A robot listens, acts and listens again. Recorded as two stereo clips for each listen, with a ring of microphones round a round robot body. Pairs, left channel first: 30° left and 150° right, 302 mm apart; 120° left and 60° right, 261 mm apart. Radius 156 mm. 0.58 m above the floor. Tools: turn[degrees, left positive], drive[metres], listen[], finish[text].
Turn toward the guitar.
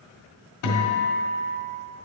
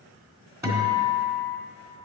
Thought: The guitar: 20° left.
Action: turn[20]
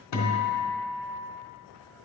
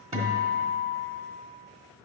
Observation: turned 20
Action: finish[Facing the guitar.]